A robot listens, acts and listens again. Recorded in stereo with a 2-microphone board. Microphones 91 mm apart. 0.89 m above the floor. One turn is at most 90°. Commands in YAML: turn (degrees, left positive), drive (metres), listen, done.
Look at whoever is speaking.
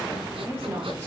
turn: -20
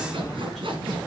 listen: true
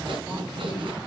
listen: true
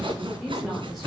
done: "Facing the woman speaking, 2 to 4 m away."